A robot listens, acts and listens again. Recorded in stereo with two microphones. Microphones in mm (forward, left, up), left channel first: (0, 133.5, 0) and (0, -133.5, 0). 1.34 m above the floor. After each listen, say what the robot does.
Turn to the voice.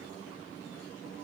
Keep listening.
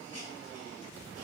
Keep listening.
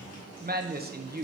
Turn 35° right.
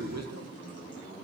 Turn 110° right.
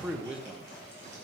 Found it: a man speaking, straight ahead, under 1 m away.